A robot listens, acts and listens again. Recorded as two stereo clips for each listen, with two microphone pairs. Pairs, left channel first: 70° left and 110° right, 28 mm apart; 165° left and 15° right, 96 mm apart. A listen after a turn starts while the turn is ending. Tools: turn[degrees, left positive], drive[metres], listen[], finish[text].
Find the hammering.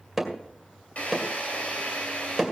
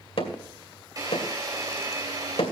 Thought: The hammering: 160° left.
Action: turn[160]
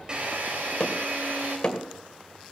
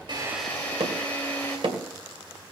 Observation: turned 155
Action: finish[Facing the hammering.]